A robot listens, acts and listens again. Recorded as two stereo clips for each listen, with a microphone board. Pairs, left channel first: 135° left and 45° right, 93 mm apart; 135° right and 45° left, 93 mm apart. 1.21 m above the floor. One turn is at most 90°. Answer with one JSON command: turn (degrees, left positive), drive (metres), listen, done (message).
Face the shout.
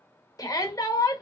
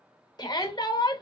{"turn": -90}
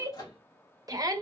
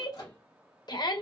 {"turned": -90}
{"turn": -90}
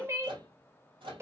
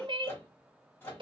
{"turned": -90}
{"turn": 20}
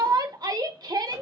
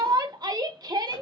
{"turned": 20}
{"done": "Found it: a shout, straight ahead."}